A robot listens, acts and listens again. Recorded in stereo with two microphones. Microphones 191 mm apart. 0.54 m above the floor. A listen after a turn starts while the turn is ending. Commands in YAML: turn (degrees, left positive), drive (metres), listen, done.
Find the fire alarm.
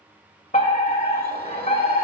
turn: 45
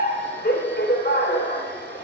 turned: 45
turn: 85
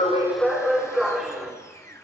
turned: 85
done: "Found it: a fire alarm, straight ahead."